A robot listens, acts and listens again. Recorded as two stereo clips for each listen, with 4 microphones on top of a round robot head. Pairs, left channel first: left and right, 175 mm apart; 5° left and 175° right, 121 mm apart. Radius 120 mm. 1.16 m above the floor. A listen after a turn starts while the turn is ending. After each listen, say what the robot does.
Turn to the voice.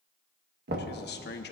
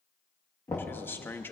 Turn 80° left.
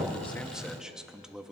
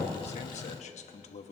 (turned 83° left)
Found it: a man speaking, straight ahead.